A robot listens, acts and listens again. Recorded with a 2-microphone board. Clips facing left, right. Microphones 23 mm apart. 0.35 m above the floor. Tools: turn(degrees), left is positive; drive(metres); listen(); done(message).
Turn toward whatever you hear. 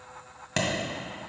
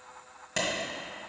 turn(degrees=25)
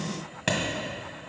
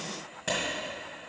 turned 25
turn(degrees=125)
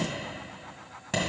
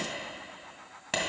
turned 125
turn(degrees=-25)
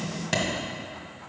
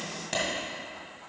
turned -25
turn(degrees=20)
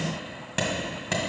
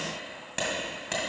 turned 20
turn(degrees=10)
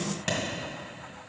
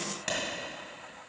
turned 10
done("Facing the clap, 1 to 2 m away.")